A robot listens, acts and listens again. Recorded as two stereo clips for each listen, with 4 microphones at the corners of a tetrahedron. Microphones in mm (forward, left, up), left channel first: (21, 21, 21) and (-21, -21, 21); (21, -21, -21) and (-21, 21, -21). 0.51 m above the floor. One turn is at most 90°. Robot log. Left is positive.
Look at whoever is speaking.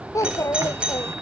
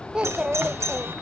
note: The child speaking: 60° left.
cmd yaw +60
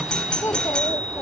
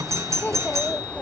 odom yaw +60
note: The child speaking is now 15° left.
cmd yaw +15
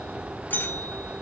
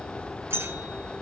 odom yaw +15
cmd idle
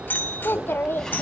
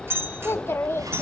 end: Facing the child speaking.